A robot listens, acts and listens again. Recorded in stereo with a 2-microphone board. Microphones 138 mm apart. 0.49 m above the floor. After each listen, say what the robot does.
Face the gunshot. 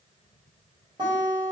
Keep listening.
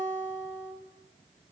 Keep listening.
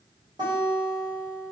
I can't make out a gunshot, only a guitar.